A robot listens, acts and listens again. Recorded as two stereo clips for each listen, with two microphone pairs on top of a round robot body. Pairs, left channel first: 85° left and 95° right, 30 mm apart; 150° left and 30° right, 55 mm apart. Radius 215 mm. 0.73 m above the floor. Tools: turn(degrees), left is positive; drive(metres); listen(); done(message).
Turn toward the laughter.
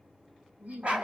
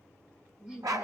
turn(degrees=-110)
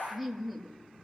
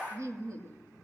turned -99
done("Found it: laughter, straight ahead, 2 to 4 m away.")